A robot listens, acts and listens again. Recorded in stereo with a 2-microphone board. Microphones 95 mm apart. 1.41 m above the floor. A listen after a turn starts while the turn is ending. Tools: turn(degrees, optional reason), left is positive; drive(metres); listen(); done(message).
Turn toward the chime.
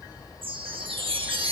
turn(degrees=-65, reason="The chime: about 65° right or 115° right.")
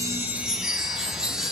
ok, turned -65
done("Found it: a chime, straight ahead, 1 to 2 m away.")